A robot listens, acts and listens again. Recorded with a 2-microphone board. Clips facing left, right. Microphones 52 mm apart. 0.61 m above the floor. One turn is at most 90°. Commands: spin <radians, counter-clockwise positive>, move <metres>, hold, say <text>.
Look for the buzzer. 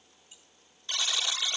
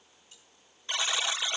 spin -0.35
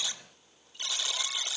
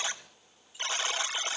spin -1.57
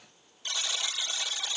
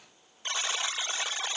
spin -0.70
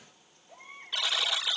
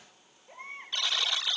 say Facing the buzzer, 1 to 2 m away.